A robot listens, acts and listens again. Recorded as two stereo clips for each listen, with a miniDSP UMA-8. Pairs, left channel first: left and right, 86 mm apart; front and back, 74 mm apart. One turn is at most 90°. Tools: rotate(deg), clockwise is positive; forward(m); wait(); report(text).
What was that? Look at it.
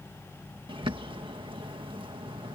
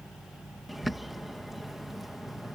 rotate(90)
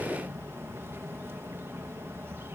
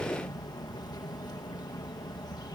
rotate(30)
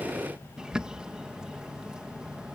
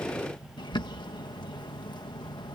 rotate(10)
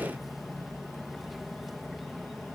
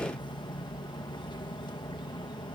report("Found it: a bird, straight ahead.")